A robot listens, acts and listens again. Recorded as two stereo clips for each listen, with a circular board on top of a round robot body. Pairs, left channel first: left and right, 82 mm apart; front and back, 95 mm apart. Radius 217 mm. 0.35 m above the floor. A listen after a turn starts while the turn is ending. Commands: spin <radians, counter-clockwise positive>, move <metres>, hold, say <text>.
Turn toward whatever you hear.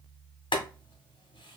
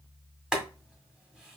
spin 1.66
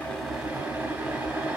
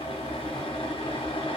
spin -0.35
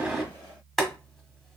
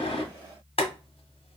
say Found it: boiling, straight ahead, 1 to 2 m away.